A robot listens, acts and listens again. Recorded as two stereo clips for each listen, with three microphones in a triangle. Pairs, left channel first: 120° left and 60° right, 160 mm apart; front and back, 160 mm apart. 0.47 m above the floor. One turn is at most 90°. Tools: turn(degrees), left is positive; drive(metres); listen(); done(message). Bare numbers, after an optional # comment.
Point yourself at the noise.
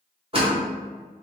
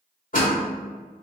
# The door slam: 15° right.
turn(-15)
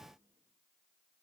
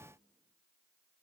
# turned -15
done("Facing where the door slam came from. I can't hear it now.")